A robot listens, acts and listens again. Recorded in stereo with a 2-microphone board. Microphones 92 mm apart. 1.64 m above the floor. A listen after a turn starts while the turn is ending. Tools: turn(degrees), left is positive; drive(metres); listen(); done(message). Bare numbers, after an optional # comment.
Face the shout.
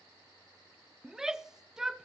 turn(-30)
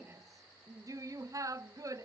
# So it is at 145° right.
turn(-145)
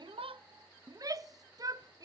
# The shout is now 40° right.
turn(-40)
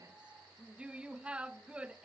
# The shout is now 10° right.
turn(-10)
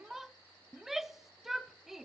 done("Found it: a shout, straight ahead, under 1 m away.")